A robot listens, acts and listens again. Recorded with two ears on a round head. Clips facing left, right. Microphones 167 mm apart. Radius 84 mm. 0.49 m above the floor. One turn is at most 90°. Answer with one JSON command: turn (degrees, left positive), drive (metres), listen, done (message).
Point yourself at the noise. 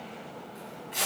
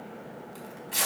{"turn": -60}
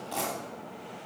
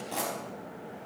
{"turn": -10}
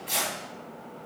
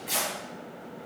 {"done": "Facing the tearing paper, over 4 m away."}